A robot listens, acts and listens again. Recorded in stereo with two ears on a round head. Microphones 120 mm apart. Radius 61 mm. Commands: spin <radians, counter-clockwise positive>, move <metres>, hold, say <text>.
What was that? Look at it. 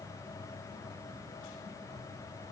hold
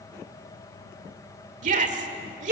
spin -1.05
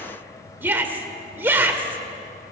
spin -0.26
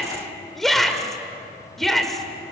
say Facing the shout, 1 to 2 m away.